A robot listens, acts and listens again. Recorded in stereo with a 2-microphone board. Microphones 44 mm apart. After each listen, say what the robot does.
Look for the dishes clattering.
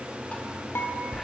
Turn 65° left.
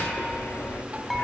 Keep listening.
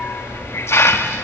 Keep listening.
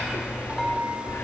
Found it: dishes clattering, straight ahead.